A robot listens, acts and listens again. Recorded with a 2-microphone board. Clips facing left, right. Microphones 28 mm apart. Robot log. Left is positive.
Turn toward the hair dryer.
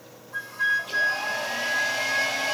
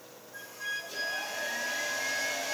note: The hair dryer: about 70° left or 110° left.
cmd yaw +70
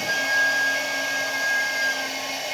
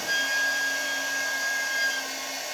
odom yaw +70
note: So it is at 40° left.
cmd yaw +40
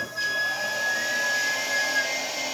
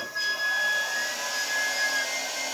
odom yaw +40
note: The hair dryer is now 15° left.
cmd yaw +15
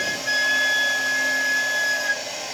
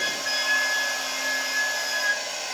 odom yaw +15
end: Found it: a hair dryer, straight ahead, over 4 m away.